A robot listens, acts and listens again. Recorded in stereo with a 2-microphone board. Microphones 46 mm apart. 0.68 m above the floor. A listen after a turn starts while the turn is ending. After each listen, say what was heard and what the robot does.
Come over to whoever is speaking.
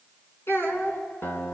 The child speaking: about 65° left or 115° left. Turn 65° left.
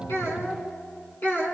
So it is at 50° left. Turn 50° left.
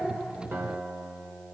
Keep listening.
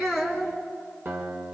The child speaking is now 15° right. Turn 15° right.
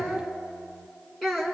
Drive 1.0 m forward.
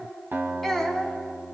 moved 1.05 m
Drive 1.0 m forward.
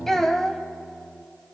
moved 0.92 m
The child speaking is now 10° left. Turn 10° left.
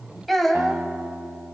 Drive 1.0 m forward.
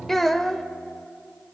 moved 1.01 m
Drive 1.0 m forward.
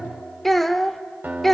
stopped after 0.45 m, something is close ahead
I am next to the child speaking.